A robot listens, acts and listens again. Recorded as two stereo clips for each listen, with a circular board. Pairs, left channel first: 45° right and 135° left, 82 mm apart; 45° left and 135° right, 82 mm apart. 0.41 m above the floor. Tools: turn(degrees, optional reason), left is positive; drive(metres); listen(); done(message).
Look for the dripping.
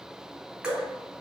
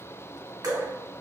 turn(degrees=-145, reason="The dripping: 145° right.")
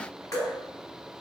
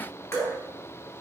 done("Facing the dripping, 1 to 2 m away.")